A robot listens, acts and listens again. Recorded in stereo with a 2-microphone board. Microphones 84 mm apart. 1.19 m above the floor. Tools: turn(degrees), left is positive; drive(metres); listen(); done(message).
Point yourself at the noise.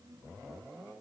listen()
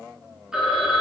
turn(degrees=-30)
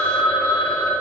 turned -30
turn(degrees=25)
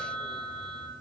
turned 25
done("Found it: a phone ringing, straight ahead, 2 to 4 m away.")